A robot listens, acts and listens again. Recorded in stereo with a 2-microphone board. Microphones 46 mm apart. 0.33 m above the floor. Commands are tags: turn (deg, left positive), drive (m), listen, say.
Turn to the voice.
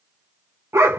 <listen/>
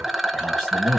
<turn deg="30"/>
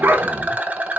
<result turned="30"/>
<listen/>
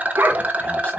<listen/>
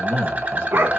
<turn deg="150"/>
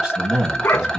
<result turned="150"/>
<turn deg="-20"/>
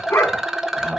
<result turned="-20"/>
<listen/>
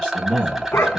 <say>Facing the man speaking, 1 to 2 m away.</say>